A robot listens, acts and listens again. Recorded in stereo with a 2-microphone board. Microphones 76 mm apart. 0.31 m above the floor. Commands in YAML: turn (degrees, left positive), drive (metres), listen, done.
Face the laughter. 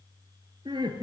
turn: -90
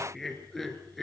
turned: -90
done: "Found it: laughter, straight ahead."